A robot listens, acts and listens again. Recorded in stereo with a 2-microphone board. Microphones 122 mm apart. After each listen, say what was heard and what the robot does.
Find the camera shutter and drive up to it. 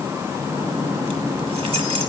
Keep listening.
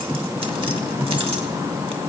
Keep listening.
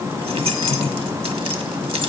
I can't make out a camera shutter, only keys jangling.